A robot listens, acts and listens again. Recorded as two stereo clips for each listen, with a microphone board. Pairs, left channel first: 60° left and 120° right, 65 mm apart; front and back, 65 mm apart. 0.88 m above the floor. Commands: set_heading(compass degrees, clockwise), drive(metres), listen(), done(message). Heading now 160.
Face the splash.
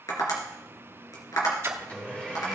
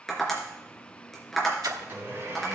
set_heading(330)
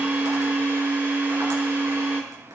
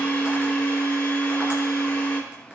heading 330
done("Facing where the splash came from. I can't hear it now.")